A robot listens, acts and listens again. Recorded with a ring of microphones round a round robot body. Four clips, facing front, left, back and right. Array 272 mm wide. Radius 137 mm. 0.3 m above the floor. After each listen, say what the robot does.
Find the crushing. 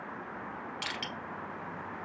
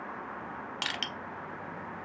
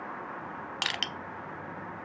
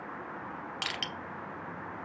Turn 175° left.
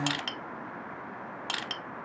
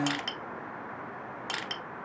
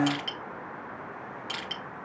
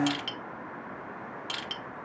Turn 40° left.
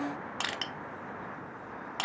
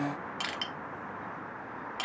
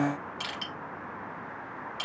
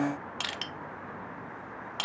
Turn 15° right.
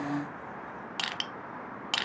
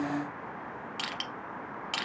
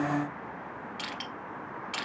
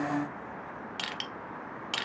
Facing the crushing.